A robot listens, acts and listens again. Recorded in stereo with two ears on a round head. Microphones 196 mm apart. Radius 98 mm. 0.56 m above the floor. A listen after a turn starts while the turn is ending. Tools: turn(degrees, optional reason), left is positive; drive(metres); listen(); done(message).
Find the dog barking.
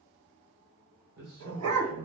turn(degrees=-75, reason="The dog barking: about 75° right or 105° right.")
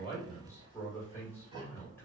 listen()
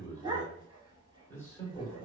turn(degrees=-20, reason="So it is at 20° right.")
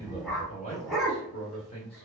done("Found it: a dog barking, straight ahead, under 1 m away.")